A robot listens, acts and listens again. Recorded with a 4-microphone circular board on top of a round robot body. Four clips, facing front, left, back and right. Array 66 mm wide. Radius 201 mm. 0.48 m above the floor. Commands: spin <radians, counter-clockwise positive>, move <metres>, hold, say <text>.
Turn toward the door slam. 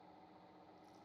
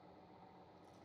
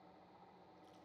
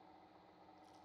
hold
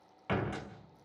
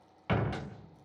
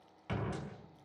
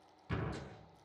spin 1.05
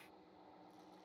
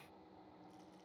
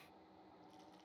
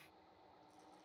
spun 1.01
say I heard a door slam from this way, but can't make it out now.